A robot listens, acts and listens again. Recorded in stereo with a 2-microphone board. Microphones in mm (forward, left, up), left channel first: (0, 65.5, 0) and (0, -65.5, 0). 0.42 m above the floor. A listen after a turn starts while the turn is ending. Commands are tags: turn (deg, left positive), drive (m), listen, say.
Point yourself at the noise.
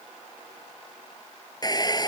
<turn deg="30"/>
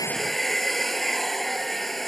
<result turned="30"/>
<say>Facing the hair dryer.</say>